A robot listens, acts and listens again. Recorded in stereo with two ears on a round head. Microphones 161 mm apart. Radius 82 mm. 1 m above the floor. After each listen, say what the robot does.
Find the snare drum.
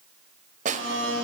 Turn 45° right.
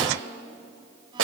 Turn 85° right.
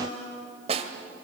Turn 35° right.
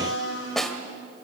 Facing the snare drum.